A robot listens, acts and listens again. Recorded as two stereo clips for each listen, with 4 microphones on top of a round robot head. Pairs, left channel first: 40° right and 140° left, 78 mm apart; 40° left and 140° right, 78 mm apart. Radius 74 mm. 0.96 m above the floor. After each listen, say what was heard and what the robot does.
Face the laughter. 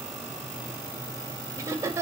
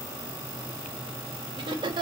The laughter: 160° right. Turn 160° right.
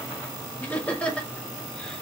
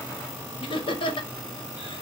The laughter is now 40° left. Turn 40° left.
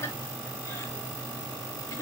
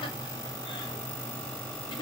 The laughter is now 20° left. Turn 20° left.
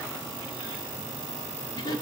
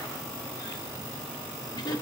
Facing the laughter, 2 to 4 m away.